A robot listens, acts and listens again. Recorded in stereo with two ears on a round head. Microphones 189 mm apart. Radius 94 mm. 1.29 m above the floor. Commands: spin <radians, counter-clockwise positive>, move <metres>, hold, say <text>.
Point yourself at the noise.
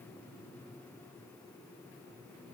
hold
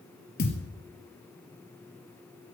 spin 0.87
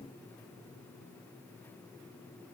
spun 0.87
hold
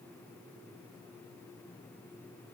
say I heard a thud, but can't make it out now. It was about straight ahead or 80° left.